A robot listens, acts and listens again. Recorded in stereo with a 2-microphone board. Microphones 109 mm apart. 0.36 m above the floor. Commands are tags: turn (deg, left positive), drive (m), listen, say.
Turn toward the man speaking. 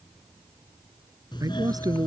<turn deg="-40"/>
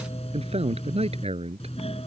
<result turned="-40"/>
<turn deg="-100"/>
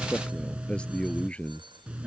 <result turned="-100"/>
<turn deg="15"/>
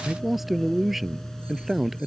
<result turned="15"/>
<say>Facing the man speaking.</say>